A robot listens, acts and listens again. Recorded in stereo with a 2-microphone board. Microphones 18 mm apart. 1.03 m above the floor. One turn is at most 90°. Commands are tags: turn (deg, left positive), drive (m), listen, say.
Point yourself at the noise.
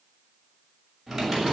<turn deg="30"/>
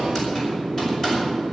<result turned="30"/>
<turn deg="90"/>
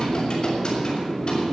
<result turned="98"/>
<turn deg="50"/>
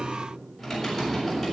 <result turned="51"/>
<say>Facing the typing on a keyboard, over 4 m away.</say>